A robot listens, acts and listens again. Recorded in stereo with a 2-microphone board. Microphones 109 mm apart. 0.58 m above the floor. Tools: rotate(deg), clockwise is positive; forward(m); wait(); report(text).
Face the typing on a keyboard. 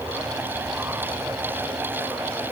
wait()
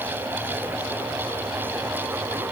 wait()
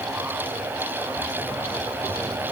report("I can't make out typing on a keyboard.")